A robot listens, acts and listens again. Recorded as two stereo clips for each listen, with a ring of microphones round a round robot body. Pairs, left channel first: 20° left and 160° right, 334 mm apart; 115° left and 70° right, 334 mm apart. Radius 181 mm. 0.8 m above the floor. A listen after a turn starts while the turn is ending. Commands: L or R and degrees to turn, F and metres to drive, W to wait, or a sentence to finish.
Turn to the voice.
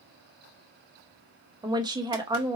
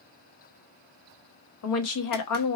L125
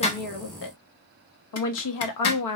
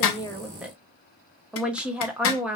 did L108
L20
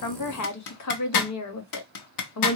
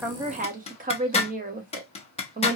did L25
Facing the woman speaking.